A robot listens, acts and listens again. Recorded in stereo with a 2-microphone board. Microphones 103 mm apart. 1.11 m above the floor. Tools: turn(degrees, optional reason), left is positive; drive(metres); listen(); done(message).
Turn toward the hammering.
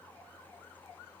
listen()
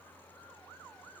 listen()
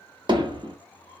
turn(degrees=-50, reason="The hammering: about 50° right or 130° right.")
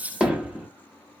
turn(degrees=-10, reason="So it is at 10° right.")
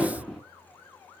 done("Facing the hammering, under 1 m away.")